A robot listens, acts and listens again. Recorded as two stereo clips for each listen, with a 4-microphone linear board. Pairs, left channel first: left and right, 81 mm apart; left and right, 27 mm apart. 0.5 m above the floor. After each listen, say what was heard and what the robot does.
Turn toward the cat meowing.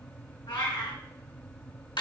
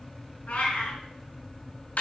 The cat meowing: about 70° left or 110° left. Turn 70° left.
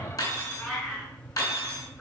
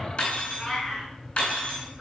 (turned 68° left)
Found it: a cat meowing, straight ahead, 2 to 4 m away.